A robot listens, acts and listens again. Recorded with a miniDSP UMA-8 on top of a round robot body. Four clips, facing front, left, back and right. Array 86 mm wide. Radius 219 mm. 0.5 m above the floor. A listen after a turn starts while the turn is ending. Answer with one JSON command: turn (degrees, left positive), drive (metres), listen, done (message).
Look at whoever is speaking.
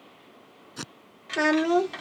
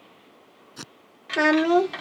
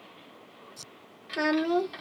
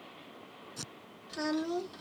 {"turn": 75}
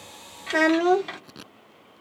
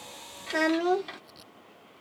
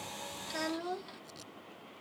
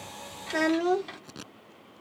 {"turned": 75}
{"done": "Found it: a child speaking, straight ahead."}